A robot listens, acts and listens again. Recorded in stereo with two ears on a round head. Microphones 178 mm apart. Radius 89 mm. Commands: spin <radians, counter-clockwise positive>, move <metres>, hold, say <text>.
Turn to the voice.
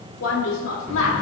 spin 1.57
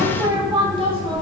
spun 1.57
spin -0.44
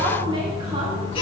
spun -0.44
hold
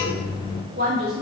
spin -0.87
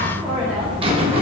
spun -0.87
hold
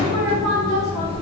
hold
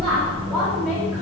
say Facing where the woman speaking came from. I can't hear it now.